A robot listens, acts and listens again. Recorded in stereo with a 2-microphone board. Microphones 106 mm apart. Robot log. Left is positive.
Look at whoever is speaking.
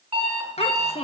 note: The child speaking: about 75° left or 105° left.
cmd yaw +75
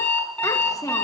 note: So it is at 30° left.
cmd yaw +30
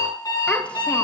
cmd idle
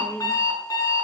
note: The child speaking is now 10° left.
cmd yaw +10
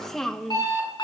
end: Facing the child speaking, 1 to 2 m away.